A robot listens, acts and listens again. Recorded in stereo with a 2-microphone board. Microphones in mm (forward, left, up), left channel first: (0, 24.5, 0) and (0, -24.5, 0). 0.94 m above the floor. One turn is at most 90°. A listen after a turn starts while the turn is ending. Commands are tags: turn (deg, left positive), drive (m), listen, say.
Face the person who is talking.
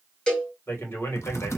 <turn deg="55"/>
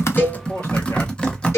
<listen/>
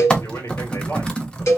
<turn deg="65"/>
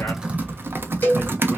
<listen/>
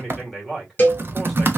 <say>Found it: a man speaking, straight ahead, 2 to 4 m away.</say>